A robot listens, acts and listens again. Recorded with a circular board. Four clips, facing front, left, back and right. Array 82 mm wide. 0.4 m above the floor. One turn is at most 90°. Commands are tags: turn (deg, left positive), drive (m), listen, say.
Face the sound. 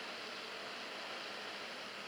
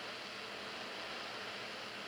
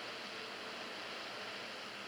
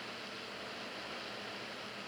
<listen/>
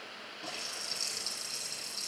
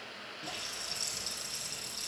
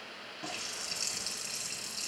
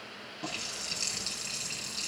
<turn deg="-90"/>
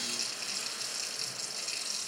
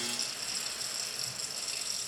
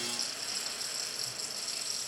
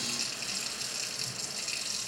<turn deg="-65"/>
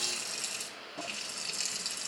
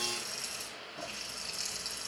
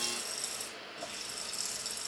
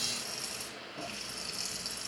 <say>Found it: a running tap, straight ahead, over 4 m away.</say>